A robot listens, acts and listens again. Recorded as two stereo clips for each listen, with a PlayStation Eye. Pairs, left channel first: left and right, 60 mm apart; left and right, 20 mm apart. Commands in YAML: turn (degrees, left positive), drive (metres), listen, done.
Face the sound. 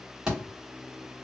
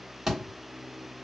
turn: -30
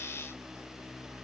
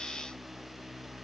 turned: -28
listen: true
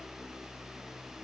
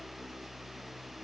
done: "I heard a thud, but can't make it out now. It was about 15° left or 140° right."